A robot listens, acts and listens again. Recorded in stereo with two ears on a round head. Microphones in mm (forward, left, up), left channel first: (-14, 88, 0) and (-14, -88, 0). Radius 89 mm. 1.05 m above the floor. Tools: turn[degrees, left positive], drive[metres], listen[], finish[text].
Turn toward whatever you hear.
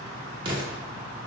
Thought: The explosion: about 25° right or 155° right.
Action: turn[-25]
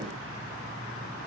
Action: listen[]
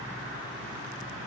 Action: finish[I heard an explosion, but can't make it out now. It was about straight ahead or 130° right.]